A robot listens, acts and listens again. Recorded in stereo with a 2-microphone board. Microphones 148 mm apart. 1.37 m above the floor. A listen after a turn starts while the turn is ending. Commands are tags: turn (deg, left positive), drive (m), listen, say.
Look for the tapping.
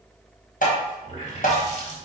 <turn deg="65"/>
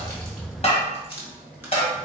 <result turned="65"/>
<turn deg="45"/>
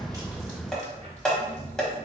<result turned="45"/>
<say>Facing the tapping.</say>